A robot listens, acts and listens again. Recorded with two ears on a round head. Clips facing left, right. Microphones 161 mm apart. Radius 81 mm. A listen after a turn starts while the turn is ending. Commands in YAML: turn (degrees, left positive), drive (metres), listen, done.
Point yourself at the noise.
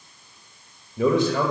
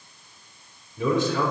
turn: 45
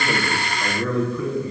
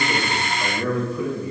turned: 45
turn: -20
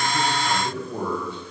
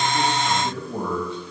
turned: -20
turn: -15
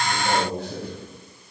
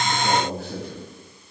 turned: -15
turn: -10
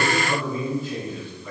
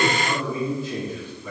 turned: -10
turn: -10
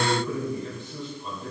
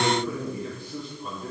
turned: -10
done: "Facing the man speaking."